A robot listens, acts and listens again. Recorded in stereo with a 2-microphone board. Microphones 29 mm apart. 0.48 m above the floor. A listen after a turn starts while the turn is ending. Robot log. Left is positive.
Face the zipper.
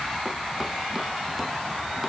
cmd idle
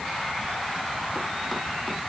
cmd idle
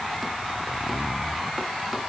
note: The zipper: about 35° right or 145° right.
cmd yaw -35
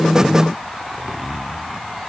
end: Found it: a zipper, straight ahead.